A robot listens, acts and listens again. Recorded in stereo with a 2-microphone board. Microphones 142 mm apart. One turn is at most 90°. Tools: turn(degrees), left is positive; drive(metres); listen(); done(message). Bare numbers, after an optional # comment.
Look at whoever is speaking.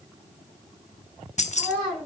turn(-30)
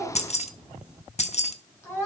# So it is at 20° left.
turn(20)
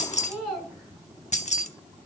done("Facing the child speaking.")